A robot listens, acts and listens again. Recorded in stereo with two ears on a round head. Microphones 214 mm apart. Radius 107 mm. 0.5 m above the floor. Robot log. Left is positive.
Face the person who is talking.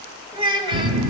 note: The child speaking: about 20° right or 160° right.
cmd yaw -20
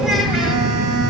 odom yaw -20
cmd idle
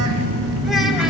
cmd idle
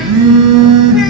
end: I heard a child speaking, but can't make it out now. It was about straight ahead or 140° right.